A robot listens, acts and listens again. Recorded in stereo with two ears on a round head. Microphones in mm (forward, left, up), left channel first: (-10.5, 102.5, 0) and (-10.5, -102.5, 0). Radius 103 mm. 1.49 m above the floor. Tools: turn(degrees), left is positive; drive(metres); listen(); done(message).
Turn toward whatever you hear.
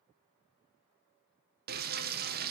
turn(degrees=-40)
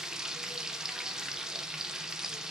done("Facing the frying.")